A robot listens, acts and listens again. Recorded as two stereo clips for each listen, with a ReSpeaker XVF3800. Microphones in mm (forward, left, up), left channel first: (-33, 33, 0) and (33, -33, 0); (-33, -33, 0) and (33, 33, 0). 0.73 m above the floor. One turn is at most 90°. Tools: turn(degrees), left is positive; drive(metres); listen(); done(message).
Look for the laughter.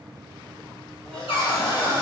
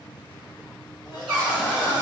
turn(degrees=-90)
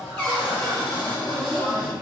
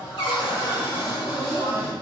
turn(degrees=-90)
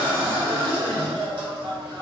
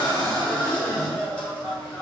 turn(degrees=-60)
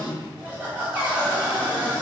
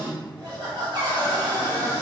turn(degrees=25)
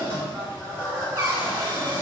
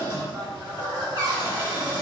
turn(degrees=10)
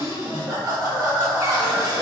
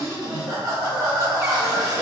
done("Facing the laughter, 1 to 2 m away.")